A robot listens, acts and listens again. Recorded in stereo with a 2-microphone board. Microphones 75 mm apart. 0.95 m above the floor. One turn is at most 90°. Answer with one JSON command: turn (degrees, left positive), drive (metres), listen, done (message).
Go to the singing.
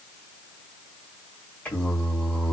{"turn": 25}
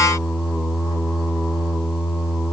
{"drive": 1.0}
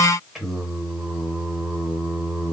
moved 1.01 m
{"drive": 1.0}
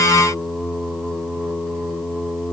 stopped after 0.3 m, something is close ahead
{"done": "Arrived at the singing, straight ahead."}